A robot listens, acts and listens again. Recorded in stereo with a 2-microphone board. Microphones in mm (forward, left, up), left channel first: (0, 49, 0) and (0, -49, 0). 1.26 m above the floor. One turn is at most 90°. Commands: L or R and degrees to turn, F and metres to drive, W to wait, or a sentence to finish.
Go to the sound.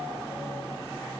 W
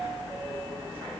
W
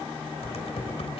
L90
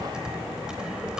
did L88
F1.0
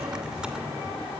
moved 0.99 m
R10
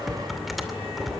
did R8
F1.0
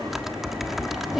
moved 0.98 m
F1.0
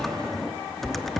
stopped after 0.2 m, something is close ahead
Arrived at the typing on a keyboard, straight ahead.